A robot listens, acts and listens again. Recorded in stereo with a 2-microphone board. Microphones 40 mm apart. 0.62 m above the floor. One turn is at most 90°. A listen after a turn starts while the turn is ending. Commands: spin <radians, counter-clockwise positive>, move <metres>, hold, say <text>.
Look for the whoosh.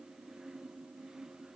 hold
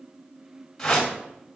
spin 0.52
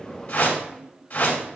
spin 1.57
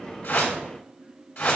spin 1.22
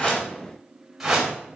say Facing the whoosh, 2 to 4 m away.